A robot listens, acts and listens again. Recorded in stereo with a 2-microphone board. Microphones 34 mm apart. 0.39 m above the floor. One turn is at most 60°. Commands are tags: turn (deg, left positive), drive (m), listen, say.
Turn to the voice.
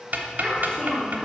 <turn deg="25"/>
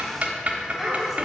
<say>Found it: a child speaking, straight ahead, 2 to 4 m away.</say>